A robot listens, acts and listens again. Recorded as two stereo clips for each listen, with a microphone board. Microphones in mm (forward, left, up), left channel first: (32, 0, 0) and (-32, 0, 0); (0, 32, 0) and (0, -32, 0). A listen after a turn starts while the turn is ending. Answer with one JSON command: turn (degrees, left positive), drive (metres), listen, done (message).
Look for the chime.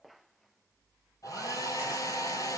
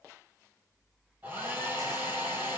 {"listen": true}
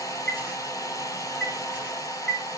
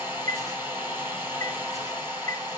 {"turn": 55}
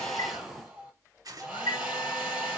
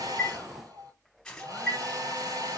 {"turn": -25}
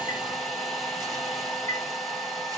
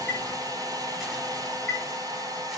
{"done": "Found it: a chime, straight ahead."}